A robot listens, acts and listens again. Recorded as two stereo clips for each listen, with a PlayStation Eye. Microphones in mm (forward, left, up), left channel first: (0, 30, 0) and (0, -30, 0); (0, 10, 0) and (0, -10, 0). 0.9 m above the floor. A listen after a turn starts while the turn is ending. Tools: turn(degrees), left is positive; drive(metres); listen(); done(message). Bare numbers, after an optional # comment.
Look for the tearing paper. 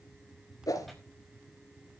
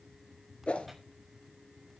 turn(30)
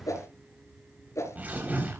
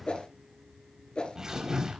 # So it is at 25° right.
turn(-25)
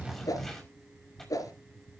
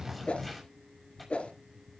done("Facing the tearing paper, over 4 m away.")